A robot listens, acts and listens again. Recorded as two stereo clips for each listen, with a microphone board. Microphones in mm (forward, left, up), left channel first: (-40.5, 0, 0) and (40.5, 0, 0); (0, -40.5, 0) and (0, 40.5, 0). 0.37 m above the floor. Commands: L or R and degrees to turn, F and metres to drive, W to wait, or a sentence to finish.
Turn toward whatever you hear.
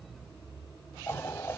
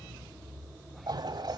L120
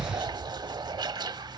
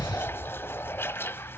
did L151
R30
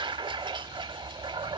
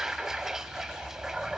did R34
Found it: a toilet flushing, straight ahead.